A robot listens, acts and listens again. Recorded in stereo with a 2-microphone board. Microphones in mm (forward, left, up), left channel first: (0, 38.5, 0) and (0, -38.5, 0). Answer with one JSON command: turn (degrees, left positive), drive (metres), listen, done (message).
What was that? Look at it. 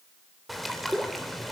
{"turn": 30}
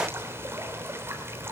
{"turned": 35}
{"turn": -35}
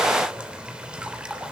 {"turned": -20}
{"turn": -15}
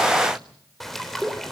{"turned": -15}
{"done": "Found it: a bird, straight ahead, 2 to 4 m away."}